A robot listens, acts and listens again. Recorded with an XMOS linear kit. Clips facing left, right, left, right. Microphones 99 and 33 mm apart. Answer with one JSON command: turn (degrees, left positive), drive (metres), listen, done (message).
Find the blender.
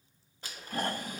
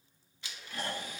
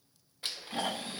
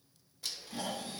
{"turn": 40}
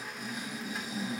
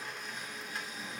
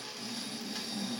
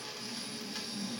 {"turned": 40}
{"done": "Facing the blender, under 1 m away."}